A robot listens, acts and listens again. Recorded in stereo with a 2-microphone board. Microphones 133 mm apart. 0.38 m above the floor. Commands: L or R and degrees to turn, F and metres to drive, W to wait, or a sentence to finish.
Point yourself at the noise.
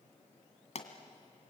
L60
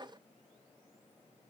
W
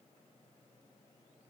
I heard a pop, but can't make it out now. It was about straight ahead or 60° left.